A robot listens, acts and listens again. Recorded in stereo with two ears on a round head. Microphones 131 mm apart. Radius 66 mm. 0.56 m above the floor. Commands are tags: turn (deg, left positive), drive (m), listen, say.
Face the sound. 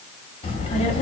<turn deg="45"/>
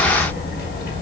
<turn deg="70"/>
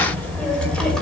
<say>Facing the child speaking, 2 to 4 m away.</say>